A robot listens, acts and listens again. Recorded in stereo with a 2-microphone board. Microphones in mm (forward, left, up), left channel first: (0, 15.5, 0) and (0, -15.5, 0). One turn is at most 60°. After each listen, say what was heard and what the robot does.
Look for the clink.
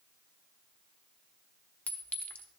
The clink: about 65° left or 115° left. Turn 60° left.
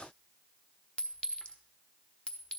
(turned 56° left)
So it is at 40° left. Turn 40° left.
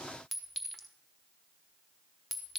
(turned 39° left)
Found it: a clink, straight ahead.